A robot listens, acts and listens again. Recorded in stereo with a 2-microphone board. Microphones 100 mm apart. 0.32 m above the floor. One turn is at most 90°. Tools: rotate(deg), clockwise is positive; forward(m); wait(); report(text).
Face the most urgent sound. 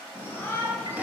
rotate(-20)
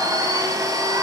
wait()
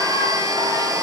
wait()
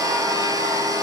report("I heard a shout, but can't make it out now. It was about straight ahead or 140° left.")